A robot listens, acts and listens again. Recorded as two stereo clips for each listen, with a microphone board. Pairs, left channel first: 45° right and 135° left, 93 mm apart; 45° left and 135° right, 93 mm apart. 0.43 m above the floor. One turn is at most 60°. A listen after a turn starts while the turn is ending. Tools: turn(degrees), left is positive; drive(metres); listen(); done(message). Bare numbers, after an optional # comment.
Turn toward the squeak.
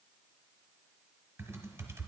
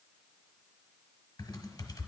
listen()
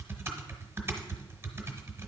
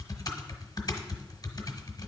listen()
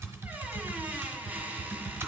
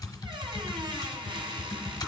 # The squeak: 155° right.
turn(-60)
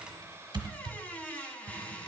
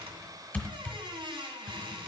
# The squeak is now 115° right.
turn(-60)
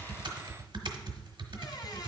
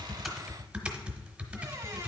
# Nothing new. It was at 55° right.
turn(-55)
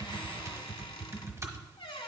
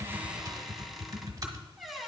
# The squeak is now 45° right.
turn(-45)
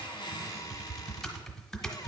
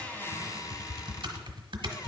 done("Found it: a squeak, straight ahead.")